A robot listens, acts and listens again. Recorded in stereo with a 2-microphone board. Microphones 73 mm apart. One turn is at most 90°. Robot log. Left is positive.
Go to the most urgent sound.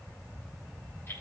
cmd idle
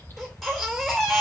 cmd yaw +30
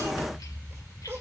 note: So it is at 25° right.
cmd yaw -25
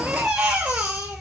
note: The baby crying is now 15° right.
cmd yaw -15
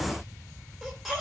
cmd fwd 1.0
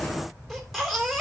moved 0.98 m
cmd fwd 1.0
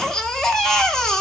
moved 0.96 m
note: The baby crying is now 10° left.
cmd yaw +10
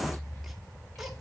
cmd fwd 1.0
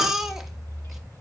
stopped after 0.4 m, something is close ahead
end: I am next to the baby crying.